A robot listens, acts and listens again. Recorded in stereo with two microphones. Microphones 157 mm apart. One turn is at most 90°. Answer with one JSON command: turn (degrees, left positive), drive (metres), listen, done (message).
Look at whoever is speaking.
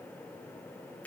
{"listen": true}
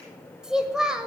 {"turn": -30}
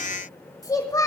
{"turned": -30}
{"turn": 25}
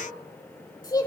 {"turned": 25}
{"turn": 30}
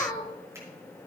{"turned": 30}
{"turn": 25}
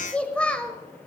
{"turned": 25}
{"turn": 10}
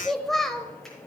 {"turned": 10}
{"done": "Facing the child speaking, 1 to 2 m away."}